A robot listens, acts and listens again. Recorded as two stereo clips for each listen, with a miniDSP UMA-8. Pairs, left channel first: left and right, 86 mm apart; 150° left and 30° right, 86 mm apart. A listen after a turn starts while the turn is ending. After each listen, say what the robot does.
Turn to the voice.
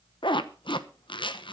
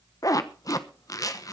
Keep listening.
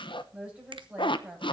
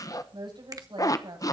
Turn 10° right.
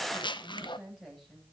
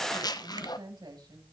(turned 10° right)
Facing the woman speaking.